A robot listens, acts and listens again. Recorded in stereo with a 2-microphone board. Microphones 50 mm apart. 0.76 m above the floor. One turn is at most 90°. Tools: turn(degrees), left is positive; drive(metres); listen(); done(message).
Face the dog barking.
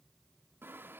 listen()
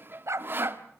turn(degrees=-70)
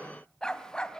turn(degrees=20)
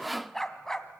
turn(degrees=10)
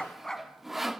turn(degrees=10)
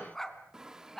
turn(degrees=10)
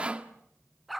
done("Facing the dog barking.")